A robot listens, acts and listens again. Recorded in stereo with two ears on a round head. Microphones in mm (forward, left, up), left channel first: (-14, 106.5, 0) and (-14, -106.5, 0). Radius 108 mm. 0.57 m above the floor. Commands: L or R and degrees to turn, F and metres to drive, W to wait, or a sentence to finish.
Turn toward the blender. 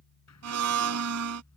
R90
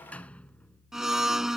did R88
Found it: a blender, straight ahead.